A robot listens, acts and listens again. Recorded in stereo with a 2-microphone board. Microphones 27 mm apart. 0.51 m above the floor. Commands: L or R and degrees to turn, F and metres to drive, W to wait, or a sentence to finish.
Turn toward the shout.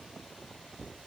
W
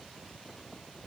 W
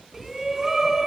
R30
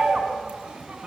R135
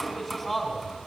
Facing the shout, over 4 m away.